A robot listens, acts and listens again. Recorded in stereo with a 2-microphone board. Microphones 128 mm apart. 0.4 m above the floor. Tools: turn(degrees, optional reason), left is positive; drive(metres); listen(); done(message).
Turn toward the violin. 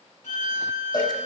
turn(degrees=75, reason="The violin: about 75° left or 105° left.")
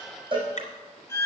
turn(degrees=20, reason="So it is at 20° left.")
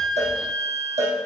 done("Facing the violin.")